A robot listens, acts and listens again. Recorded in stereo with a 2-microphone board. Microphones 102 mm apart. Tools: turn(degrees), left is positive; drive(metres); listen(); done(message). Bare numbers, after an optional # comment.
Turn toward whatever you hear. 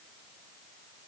listen()
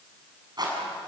# The rattle: about 45° right or 135° right.
turn(-45)
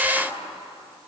listen()
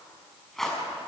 done("Facing the rattle, over 4 m away.")